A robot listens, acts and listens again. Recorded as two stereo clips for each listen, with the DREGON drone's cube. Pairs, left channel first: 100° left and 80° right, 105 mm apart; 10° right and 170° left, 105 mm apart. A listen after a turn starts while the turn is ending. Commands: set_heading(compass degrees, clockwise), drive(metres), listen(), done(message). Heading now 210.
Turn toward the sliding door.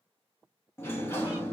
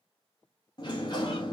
set_heading(175)
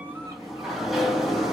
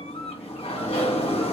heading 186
set_heading(176)
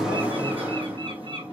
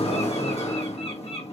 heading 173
done("Facing the sliding door.")